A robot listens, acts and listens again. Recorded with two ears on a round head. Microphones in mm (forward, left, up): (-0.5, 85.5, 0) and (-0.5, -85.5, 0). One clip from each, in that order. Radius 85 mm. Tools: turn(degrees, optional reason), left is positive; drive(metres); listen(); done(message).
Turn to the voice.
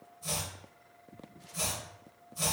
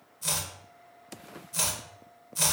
listen()
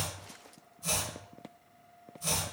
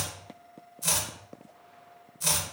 listen()
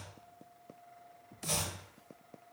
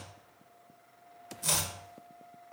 done("I can't make out anyone speaking, only chopping.")